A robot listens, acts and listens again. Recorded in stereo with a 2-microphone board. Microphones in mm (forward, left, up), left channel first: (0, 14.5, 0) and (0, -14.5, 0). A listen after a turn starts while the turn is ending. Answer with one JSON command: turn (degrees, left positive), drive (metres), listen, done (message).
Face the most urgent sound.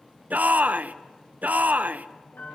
{"turn": -65}
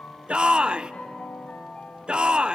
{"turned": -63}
{"turn": -35}
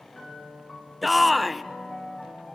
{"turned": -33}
{"done": "Found it: a shout, straight ahead."}